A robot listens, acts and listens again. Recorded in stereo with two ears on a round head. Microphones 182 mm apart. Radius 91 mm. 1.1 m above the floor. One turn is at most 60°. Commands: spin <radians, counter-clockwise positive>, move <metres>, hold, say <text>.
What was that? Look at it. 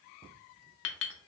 spin 1.05
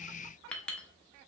say Found it: a clink, straight ahead, under 1 m away.